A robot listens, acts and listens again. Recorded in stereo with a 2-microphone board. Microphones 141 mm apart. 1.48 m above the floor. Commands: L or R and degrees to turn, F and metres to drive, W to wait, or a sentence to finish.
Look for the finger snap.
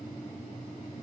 W
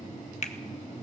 L55
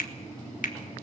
L75
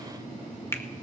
L15
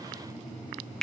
Facing the finger snap.